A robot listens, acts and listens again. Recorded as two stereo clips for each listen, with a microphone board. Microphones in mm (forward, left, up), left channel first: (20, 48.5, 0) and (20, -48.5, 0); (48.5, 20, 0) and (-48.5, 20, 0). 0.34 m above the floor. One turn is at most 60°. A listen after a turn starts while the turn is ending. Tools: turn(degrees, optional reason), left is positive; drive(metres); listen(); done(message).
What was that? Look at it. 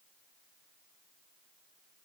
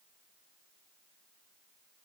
listen()
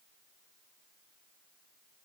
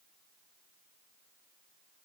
listen()
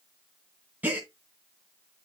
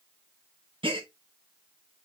turn(degrees=-60, reason="The gasp: 160° right.")
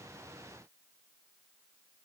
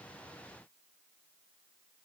turn(degrees=-60, reason="Nothing new. It was at 100° right.")
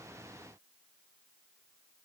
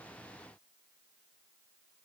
turn(degrees=-40, reason="Nothing new. It was at 40° right.")
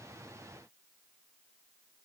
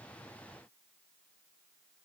done("Facing where the gasp came from. I can't hear it now.")